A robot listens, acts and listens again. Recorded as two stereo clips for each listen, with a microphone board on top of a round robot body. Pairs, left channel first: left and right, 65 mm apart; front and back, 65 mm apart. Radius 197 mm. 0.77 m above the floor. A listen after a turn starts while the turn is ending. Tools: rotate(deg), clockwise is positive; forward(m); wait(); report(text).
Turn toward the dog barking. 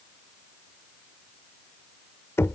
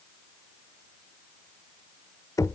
wait()
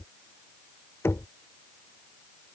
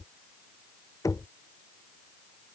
wait()
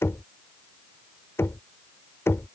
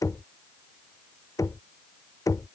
report("I can't make out a dog barking, only knocking.")